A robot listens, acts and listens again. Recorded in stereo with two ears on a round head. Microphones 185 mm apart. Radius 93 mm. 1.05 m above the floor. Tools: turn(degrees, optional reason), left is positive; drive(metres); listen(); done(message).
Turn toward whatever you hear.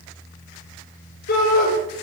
turn(degrees=45, reason="The shout: about 45° left or 135° left.")
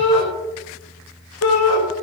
turn(degrees=85, reason="So it is at 85° left.")
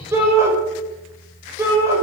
turn(degrees=-15, reason="The shout is now 15° right.")
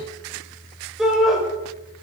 done("Found it: a shout, straight ahead, over 4 m away.")